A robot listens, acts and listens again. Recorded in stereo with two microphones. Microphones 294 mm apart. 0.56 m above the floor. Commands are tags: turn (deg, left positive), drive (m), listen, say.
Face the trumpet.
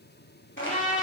<turn deg="25"/>
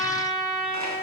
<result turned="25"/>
<say>Facing the trumpet.</say>